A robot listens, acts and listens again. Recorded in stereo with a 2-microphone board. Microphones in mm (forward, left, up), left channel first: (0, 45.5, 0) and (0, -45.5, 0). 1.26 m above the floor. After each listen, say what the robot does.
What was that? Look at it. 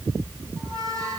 Turn 40° right.
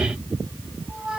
Turn 95° right.
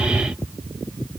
Keep listening.
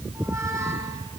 Turn 30° right.
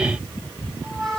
Facing the squeak, over 4 m away.